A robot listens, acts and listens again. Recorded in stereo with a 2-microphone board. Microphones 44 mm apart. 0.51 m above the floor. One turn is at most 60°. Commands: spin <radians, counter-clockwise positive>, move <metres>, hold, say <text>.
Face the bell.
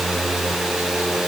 hold
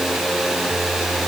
hold
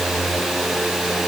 say I can't make out a bell.